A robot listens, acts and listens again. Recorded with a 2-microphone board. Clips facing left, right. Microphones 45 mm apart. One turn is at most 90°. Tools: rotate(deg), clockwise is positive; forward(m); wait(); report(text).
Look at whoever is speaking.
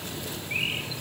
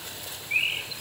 wait()
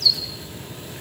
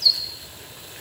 wait()
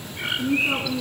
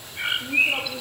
rotate(-55)
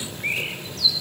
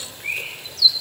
wait()
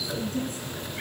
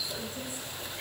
rotate(-55)
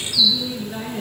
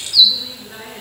rotate(15)
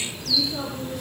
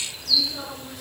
report("Facing the woman speaking.")